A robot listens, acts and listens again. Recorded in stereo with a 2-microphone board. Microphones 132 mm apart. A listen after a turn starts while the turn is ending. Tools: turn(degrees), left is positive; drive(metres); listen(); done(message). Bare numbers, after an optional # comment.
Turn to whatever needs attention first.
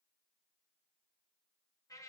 listen()
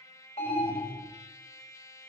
# The alarm: about 70° left or 110° left.
turn(70)
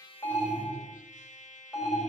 done("Facing the alarm, 2 to 4 m away.")